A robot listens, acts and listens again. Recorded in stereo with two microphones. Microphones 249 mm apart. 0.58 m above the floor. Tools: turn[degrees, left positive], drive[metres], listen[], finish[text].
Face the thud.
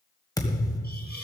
Action: turn[30]
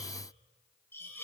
Action: listen[]
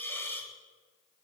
Action: finish[I heard a thud, but can't make it out now. It was about 15° right or 135° left.]